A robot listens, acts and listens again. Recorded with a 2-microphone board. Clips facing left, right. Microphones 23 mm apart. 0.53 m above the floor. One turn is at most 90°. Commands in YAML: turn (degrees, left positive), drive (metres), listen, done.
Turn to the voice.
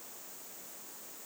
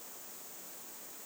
listen: true
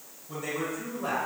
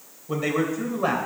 turn: -50
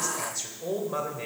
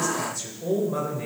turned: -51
turn: 25
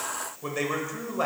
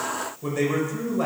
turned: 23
turn: 25
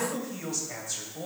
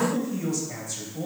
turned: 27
turn: 15
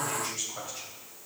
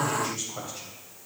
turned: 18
done: "Found it: a man speaking, straight ahead."